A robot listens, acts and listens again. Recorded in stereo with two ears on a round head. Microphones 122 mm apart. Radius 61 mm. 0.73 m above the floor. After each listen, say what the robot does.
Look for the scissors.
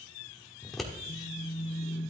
Turn 30° left.
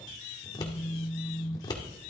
Turn 150° left.
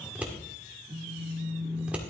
Turn 10° right.
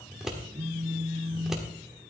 Found it: scissors, straight ahead, 1 to 2 m away.